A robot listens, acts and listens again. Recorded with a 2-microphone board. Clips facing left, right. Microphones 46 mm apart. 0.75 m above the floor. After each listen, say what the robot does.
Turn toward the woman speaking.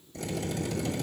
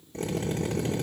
Keep listening.
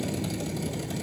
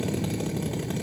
Keep listening.
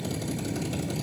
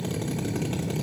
I can't make out a woman speaking, only a drill.